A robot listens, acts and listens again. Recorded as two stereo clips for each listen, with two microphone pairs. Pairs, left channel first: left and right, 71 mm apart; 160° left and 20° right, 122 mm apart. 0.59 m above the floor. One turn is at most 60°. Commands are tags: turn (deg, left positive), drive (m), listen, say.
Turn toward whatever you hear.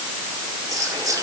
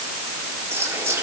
<turn deg="-60"/>
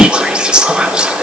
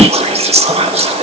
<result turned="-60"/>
<turn deg="-15"/>
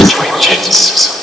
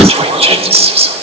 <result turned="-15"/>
<say>Found it: whispering, straight ahead, 1 to 2 m away.</say>